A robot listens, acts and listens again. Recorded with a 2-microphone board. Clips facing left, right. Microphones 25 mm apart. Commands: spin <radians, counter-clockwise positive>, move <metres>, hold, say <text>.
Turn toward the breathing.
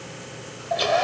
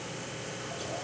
hold
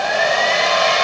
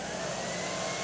hold
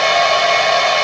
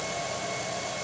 say I can't make out breathing to turn to.